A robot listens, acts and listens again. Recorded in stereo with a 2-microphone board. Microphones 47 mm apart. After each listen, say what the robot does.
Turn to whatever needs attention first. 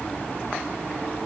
Keep listening.
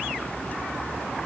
Keep listening.
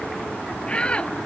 Turn 25° left.
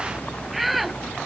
Found it: a shout, straight ahead.